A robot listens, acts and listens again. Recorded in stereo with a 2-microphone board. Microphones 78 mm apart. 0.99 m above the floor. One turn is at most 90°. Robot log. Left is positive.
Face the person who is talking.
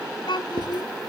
cmd yaw +90
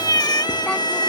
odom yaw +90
cmd idle
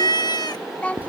note: The child speaking is now 20° left.
cmd yaw +20
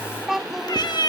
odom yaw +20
end: Found it: a child speaking, straight ahead.